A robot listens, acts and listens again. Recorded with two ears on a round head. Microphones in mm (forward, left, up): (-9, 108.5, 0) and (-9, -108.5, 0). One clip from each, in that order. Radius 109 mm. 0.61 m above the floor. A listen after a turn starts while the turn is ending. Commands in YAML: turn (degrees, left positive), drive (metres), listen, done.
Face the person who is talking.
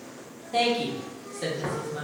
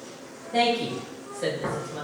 turn: 50
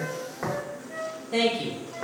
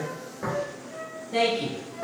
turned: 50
turn: 70
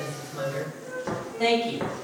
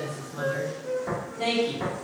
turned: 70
done: "Found it: a woman speaking, straight ahead."